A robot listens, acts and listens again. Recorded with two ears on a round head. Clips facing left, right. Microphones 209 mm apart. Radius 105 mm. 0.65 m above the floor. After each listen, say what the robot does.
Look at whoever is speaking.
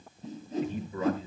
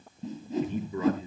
Turn 90° right.
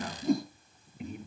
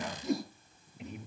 Facing the man speaking.